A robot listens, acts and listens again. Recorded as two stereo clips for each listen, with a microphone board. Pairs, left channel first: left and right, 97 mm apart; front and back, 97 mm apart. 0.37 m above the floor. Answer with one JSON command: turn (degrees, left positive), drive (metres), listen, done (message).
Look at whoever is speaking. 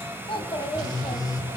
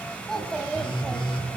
{"turn": 85}
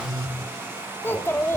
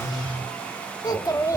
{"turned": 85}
{"turn": 40}
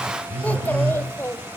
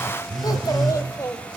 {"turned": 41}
{"turn": 45}
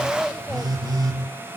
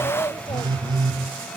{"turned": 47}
{"turn": 15}
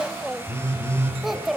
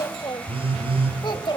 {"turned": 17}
{"done": "Facing the child speaking, 1 to 2 m away."}